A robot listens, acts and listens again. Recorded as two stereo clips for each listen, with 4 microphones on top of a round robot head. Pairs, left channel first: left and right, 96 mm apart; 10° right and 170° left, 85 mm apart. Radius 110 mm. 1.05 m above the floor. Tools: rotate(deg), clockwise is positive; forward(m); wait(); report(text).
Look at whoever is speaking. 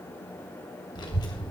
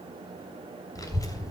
rotate(-40)
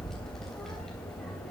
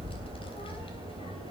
report("Facing the child speaking.")